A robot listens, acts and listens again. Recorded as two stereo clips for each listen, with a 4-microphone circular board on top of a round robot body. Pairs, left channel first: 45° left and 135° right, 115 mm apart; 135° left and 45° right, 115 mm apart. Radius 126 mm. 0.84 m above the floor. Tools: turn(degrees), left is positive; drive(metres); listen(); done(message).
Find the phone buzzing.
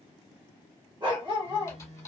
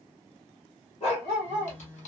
turn(degrees=-155)
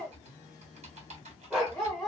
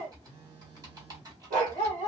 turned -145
turn(degrees=-10)
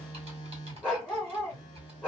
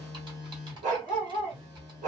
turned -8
done("Facing the phone buzzing.")